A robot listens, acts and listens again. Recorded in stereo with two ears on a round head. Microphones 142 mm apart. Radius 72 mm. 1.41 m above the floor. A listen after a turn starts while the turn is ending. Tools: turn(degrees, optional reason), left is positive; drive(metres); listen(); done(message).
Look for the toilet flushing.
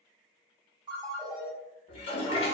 turn(degrees=35, reason="The toilet flushing: about 35° left or 145° left.")
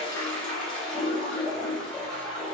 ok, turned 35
done("Found it: a toilet flushing, straight ahead, under 1 m away.")